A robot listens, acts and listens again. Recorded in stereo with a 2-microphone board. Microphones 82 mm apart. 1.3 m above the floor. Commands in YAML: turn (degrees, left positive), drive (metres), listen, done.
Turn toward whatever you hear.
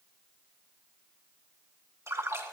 turn: -35
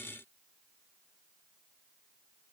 listen: true
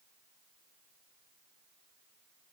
done: "I heard a splash, but can't make it out now. It was about straight ahead or 110° right."